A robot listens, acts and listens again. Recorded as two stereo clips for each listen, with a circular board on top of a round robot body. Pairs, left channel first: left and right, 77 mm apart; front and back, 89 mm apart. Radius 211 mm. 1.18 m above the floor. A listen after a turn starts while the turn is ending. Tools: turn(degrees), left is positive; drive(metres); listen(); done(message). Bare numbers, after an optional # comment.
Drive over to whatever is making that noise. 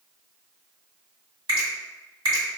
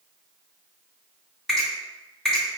# The finger snap: 85° right.
turn(-85)
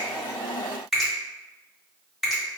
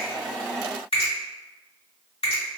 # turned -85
drive(1.0)
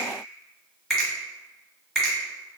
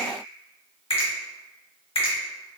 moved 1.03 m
drive(1.0)
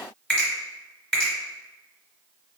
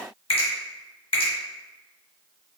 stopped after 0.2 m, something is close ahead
# The finger snap is now 10° left.
turn(10)
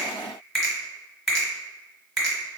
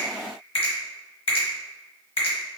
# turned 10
done("I am next to the finger snap.")